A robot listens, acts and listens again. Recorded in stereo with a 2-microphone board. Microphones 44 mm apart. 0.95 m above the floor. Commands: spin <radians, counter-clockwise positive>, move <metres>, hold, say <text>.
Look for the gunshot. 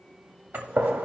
spin -0.96
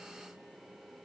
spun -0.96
hold
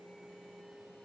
say I heard a gunshot, but can't make it out now. It was about straight ahead or 70° right.